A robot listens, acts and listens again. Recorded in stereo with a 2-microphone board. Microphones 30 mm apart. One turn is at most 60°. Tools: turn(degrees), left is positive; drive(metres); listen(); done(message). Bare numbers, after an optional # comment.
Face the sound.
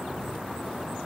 listen()
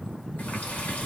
# The running tap: about 70° left or 110° left.
turn(60)
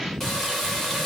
# So it is at 10° left.
turn(10)
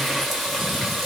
done("Facing the running tap, 1 to 2 m away.")